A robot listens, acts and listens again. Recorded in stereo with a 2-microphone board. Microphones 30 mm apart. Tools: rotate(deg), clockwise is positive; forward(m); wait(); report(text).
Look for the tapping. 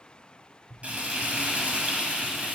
rotate(45)
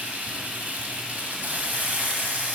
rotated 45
wait()
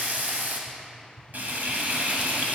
report("Found it: tapping, straight ahead, 1 to 2 m away.")